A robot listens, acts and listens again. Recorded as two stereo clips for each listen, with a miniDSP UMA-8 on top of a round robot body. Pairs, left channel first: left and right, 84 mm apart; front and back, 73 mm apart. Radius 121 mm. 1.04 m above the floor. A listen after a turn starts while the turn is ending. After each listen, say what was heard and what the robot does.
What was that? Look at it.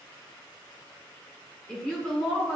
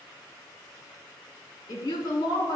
The woman speaking: 10° left. Turn 10° left.
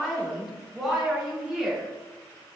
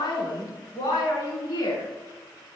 Facing the woman speaking.